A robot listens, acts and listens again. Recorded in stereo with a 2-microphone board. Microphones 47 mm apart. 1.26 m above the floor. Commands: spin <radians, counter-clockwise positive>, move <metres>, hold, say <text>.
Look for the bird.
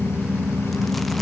hold
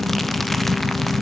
hold
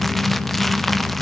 say I can't make out a bird to turn to.